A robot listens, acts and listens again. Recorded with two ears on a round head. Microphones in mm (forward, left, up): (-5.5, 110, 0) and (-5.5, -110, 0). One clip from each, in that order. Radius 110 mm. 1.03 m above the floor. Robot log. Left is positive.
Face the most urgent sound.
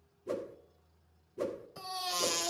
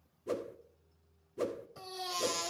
cmd yaw +30
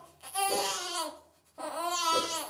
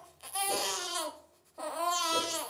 note: So it is at 15° right.
cmd yaw -15
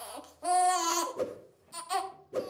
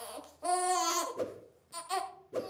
end: Facing the baby crying.